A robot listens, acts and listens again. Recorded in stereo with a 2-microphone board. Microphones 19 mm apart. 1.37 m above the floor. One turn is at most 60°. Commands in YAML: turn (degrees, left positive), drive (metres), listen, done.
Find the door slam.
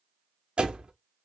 turn: -60
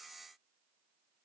listen: true
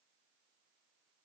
done: "I heard a door slam, but can't make it out now. It was about 10° right or 50° right."